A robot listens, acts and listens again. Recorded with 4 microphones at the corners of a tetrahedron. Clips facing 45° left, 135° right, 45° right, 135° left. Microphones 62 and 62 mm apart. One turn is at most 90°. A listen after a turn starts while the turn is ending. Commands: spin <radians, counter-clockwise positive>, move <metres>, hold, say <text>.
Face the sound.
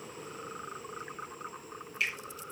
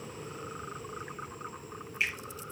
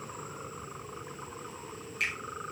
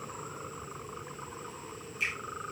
spin -1.22
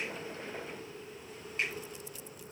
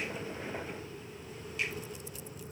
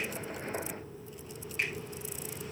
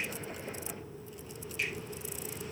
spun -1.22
hold
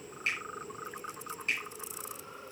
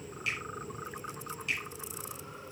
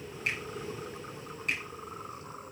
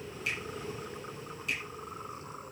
say Found it: a finger snap, straight ahead, over 4 m away.